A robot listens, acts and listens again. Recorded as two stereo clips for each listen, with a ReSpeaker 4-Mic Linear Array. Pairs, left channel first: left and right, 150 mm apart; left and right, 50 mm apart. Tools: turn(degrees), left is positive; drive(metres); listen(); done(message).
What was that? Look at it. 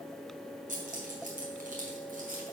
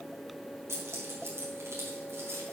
turn(degrees=-75)
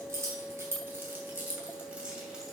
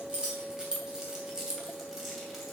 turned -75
done("Found it: keys jangling, straight ahead.")